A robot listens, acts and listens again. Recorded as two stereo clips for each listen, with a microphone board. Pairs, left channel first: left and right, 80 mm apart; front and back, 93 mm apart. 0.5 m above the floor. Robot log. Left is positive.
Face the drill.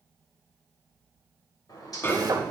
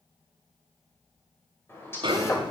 note: The drill: 55° right.
cmd yaw -55
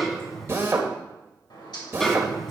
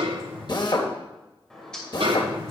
note: The drill is now 35° right.
cmd yaw -35
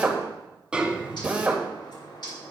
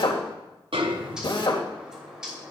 note: The drill is now 20° right.
cmd yaw -20
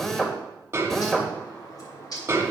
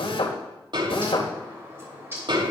end: Found it: a drill, straight ahead, 1 to 2 m away.